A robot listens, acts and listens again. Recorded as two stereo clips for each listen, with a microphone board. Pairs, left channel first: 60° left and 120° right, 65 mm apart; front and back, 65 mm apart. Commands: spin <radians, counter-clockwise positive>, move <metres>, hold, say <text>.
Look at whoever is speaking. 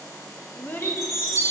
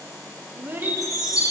spin 2.09
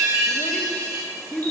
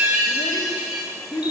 spin -0.17
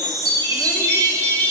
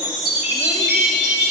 hold
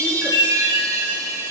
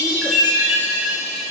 hold
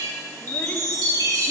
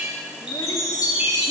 say Facing where the child speaking came from. I can't hear it now.